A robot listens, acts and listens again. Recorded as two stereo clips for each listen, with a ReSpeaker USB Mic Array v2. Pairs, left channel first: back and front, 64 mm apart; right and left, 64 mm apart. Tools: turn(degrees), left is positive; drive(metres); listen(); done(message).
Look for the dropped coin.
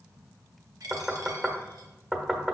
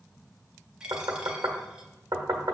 turn(degrees=15)
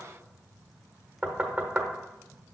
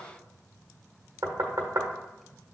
done("I heard a dropped coin from this way, but can't make it out now.")